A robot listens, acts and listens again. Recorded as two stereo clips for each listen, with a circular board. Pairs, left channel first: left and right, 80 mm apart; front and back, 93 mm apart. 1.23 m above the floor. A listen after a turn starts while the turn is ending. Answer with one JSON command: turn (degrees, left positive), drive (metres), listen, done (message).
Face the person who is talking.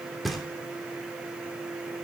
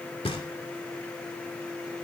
{"listen": true}
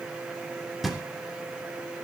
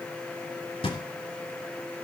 {"listen": true}
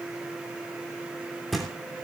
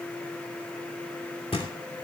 {"done": "I can't make out anyone speaking to turn to."}